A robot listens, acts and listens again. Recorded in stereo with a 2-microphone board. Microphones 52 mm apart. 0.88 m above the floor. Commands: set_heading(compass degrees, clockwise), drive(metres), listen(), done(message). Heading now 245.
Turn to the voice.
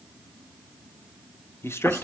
set_heading(185)
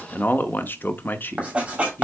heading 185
set_heading(135)
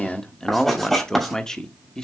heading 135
set_heading(120)
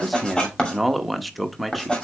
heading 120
done("Found it: a man speaking, straight ahead, under 1 m away.")